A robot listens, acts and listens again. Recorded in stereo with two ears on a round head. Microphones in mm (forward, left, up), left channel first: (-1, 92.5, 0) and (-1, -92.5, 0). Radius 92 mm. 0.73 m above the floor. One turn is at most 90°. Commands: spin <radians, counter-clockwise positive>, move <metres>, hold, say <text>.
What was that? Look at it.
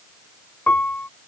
spin 0.52
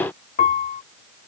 spin 1.57
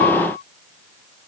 spin 0.87
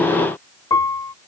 spin 0.35
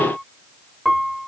say Facing the piano.